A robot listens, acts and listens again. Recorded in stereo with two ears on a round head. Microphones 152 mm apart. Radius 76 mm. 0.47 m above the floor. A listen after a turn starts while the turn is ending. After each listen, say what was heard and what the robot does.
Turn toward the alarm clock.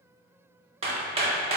Keep listening.
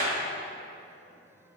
Keep listening.
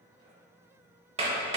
I can't make out an alarm clock, only hammering.